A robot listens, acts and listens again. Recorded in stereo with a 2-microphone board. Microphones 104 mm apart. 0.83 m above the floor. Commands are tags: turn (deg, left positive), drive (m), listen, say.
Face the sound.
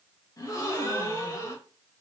<turn deg="35"/>
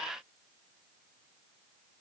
<listen/>
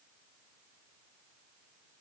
<say>I heard a gasp, but can't make it out now. It was about straight ahead or 110° left.</say>